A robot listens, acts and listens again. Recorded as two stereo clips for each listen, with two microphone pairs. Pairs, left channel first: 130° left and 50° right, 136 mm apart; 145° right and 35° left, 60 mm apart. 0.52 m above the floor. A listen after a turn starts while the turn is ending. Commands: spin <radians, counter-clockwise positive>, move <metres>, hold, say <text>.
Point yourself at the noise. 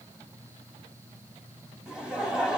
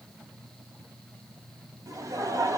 spin 0.61
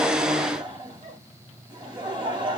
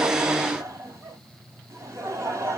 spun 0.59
say Found it: laughter, straight ahead, 1 to 2 m away.